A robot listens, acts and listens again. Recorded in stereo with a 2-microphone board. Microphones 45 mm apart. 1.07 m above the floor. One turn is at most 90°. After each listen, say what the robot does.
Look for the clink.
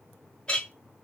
Turn 25° left.
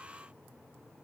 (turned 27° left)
Keep listening.
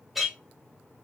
Facing the clink, 1 to 2 m away.